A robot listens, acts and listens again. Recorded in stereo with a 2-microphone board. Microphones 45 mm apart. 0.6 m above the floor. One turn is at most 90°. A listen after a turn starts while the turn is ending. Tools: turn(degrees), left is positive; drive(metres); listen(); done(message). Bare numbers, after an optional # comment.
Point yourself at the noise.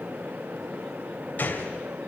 # The gunshot: about 45° left or 135° left.
turn(45)
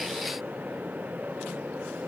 listen()
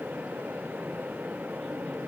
done("I heard a gunshot, but can't make it out now. It was about straight ahead or 90° left.")